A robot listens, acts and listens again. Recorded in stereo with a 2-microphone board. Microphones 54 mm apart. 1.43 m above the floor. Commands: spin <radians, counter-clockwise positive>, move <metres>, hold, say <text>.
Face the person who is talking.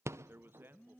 spin -0.79
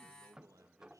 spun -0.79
spin -1.57
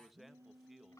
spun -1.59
say Facing the man speaking.